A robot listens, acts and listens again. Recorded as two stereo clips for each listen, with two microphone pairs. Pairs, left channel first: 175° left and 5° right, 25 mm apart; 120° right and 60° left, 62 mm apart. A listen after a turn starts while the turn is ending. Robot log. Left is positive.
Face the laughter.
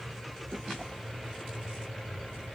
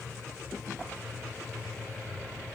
cmd idle
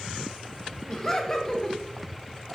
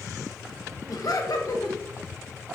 note: The laughter: 120° right.
cmd yaw -120
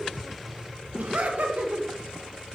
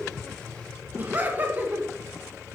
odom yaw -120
end: Found it: laughter, straight ahead.